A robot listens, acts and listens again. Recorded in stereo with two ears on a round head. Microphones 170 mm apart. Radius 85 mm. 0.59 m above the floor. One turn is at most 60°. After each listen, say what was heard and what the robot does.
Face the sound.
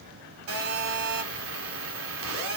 Turn 60° right.
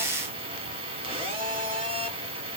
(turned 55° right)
So it is at 30° right. Turn 30° right.
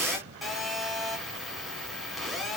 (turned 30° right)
Facing the phone buzzing, 1 to 2 m away.